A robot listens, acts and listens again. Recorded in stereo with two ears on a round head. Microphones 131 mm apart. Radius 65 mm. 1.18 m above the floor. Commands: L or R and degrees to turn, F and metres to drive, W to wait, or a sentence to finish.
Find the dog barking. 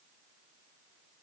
W
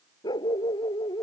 L25
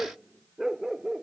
Found it: a dog barking, straight ahead.